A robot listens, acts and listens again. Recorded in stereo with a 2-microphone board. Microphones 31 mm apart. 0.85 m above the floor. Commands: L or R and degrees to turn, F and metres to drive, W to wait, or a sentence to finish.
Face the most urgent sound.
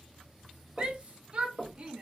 R40
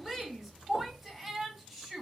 Found it: a shout, straight ahead, 1 to 2 m away.